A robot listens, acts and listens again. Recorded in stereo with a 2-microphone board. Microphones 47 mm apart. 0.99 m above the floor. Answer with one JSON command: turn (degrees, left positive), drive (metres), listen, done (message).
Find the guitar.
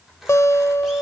{"turn": 75}
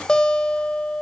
{"turn": 15}
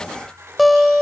{"done": "Facing the guitar, 1 to 2 m away."}